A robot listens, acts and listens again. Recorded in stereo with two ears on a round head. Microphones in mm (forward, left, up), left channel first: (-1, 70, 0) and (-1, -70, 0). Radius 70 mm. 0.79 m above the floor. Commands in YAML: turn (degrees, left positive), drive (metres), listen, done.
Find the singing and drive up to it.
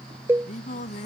turn: 50
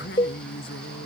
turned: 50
turn: 85
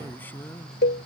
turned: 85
listen: true
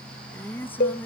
turn: 15
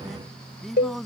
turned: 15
drive: 1.0
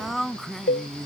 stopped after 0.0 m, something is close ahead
done: "Something is in my way. I am facing the singing but have not reached it."